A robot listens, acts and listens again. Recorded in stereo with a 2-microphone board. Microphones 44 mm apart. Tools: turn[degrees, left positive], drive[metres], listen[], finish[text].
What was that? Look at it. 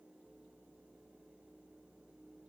Action: listen[]
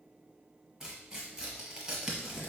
Action: turn[-30]
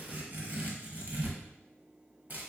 Thought: So it is at 140° right.
Action: turn[-140]
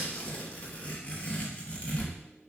Thought: The tearing paper is now 25° left.
Action: turn[25]
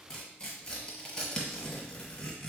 Thought: The tearing paper is now 15° left.
Action: turn[15]
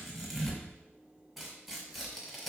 Action: finish[Facing the tearing paper, 1 to 2 m away.]